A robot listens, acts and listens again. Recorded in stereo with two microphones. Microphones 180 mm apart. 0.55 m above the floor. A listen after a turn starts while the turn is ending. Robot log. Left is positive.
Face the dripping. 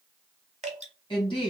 note: The dripping: about 40° right or 140° right.
cmd yaw -40
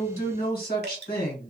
note: So it is at 95° right.
cmd yaw -95
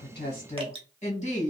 note: The dripping is now 35° right.
cmd yaw -35
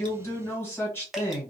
end: Facing the dripping, under 1 m away.